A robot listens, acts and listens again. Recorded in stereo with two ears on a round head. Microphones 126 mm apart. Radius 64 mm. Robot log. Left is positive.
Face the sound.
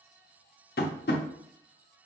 note: The tapping: about 75° left or 105° left.
cmd yaw +75
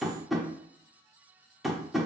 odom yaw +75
end: Found it: tapping, straight ahead.